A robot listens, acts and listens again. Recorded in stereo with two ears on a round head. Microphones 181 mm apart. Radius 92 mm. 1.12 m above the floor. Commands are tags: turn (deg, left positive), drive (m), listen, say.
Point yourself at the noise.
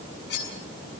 <turn deg="60"/>
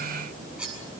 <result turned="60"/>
<say>Found it: cutlery clinking, straight ahead.</say>